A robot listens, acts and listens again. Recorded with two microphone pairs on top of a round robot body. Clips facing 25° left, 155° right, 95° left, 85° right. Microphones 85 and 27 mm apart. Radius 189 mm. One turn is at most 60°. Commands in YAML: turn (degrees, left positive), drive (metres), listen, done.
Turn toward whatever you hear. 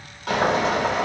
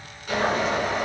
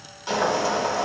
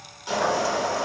turn: 15
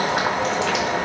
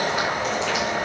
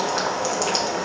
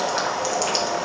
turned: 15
done: "Facing the boiling, 2 to 4 m away."